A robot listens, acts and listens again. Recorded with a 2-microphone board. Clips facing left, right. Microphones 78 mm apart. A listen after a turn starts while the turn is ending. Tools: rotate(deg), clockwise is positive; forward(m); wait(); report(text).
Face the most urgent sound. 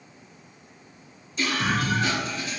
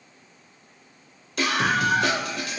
rotate(90)
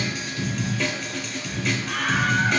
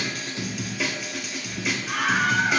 report("Found it: a scream, straight ahead, 2 to 4 m away.")